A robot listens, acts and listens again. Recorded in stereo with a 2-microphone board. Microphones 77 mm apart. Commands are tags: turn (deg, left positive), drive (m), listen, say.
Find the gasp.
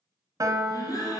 <turn deg="55"/>
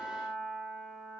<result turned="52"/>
<listen/>
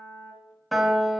<say>I heard a gasp, but can't make it out now. It was about straight ahead or 75° left.</say>